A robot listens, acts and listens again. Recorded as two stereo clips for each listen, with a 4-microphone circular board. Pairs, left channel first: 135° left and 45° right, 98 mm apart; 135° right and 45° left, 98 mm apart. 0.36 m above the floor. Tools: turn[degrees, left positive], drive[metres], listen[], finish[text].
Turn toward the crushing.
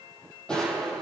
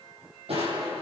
Thought: The crushing: 55° left.
Action: turn[55]
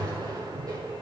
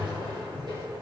Action: finish[Found it: crushing, straight ahead.]